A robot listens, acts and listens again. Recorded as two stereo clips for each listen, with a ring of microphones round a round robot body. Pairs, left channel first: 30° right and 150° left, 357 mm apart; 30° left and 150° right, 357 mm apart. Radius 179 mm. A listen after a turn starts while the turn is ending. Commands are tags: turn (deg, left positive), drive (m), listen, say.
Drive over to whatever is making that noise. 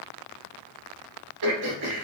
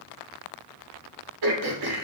<turn deg="180"/>
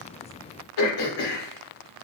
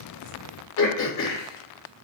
<turn deg="-15"/>
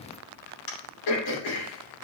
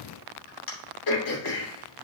<drive m="1.0"/>
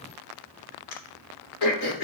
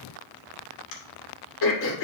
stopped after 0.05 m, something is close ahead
<turn deg="-10"/>
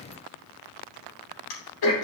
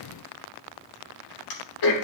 <say>Something is in my way. I am facing the throat clearing but have not reached it.</say>